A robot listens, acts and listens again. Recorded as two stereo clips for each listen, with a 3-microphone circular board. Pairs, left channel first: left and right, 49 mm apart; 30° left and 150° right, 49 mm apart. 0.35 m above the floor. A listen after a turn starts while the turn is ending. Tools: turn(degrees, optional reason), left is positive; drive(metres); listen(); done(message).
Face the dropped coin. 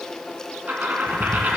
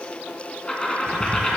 turn(degrees=-45, reason="The dropped coin: 45° right.")
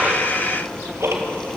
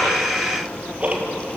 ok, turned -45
done("I heard a dropped coin from this way, but can't make it out now.")